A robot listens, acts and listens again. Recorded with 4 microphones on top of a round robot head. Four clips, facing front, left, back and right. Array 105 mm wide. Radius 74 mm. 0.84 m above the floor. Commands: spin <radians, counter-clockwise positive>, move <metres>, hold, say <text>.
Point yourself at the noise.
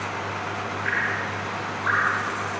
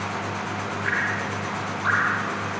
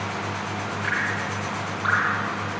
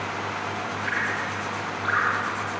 spin 3.05
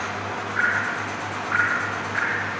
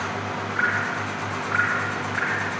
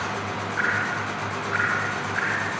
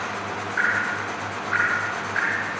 spin 0.70
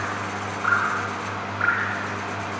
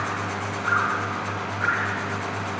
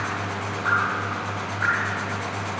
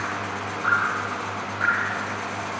spin -0.35
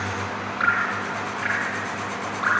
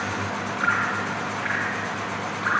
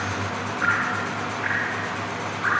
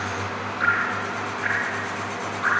say Found it: dripping, straight ahead, over 4 m away.